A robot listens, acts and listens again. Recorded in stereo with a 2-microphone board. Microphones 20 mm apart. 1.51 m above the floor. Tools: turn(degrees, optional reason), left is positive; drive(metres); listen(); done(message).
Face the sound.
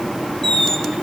turn(degrees=25, reason="The squeak: about 25° left or 155° left.")
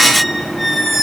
done("Facing the squeak, 1 to 2 m away.")